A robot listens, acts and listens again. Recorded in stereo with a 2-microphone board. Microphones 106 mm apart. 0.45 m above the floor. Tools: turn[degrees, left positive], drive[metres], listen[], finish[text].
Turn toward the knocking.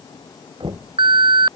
Thought: The knocking: about 45° right or 135° right.
Action: turn[-45]
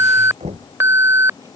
Thought: So it is at 90° right.
Action: turn[-90]
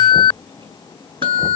Action: listen[]
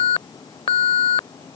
Action: listen[]
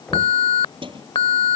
Action: finish[I heard knocking from this way, but can't make it out now.]